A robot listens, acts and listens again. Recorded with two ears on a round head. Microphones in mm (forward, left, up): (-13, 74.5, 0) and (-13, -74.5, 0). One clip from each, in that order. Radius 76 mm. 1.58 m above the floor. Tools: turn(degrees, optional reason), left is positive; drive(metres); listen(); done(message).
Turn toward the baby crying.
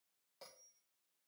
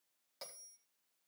listen()
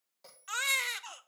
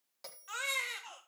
turn(degrees=50, reason="The baby crying: about 50° left or 130° left.")
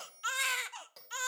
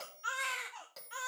turn(degrees=75, reason="So it is at 75° left.")
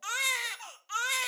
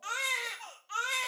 turn(degrees=35, reason="The baby crying is now 35° left.")
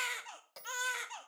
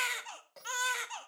done("Facing the baby crying.")